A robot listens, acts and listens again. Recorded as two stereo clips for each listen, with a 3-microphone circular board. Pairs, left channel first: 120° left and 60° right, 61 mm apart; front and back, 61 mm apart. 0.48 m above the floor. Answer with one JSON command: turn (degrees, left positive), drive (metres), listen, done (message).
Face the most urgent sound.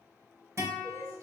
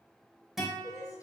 {"turn": -35}
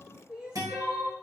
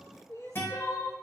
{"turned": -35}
{"turn": 15}
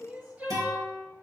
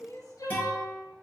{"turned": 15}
{"done": "Found it: crying, straight ahead, 2 to 4 m away."}